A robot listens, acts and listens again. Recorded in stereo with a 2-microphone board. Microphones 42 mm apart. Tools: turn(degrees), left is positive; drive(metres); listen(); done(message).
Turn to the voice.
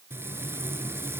listen()
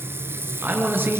turn(degrees=-60)
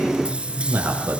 turn(degrees=-60)
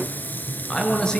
turn(degrees=20)
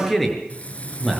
done("Found it: a man speaking, straight ahead.")